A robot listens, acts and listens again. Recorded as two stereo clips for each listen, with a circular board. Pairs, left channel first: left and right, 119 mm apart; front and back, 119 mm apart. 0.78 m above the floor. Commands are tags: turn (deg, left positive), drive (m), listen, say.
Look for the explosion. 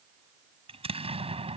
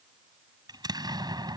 <turn deg="-125"/>
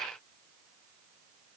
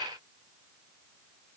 <say>Facing where the explosion came from. I can't hear it now.</say>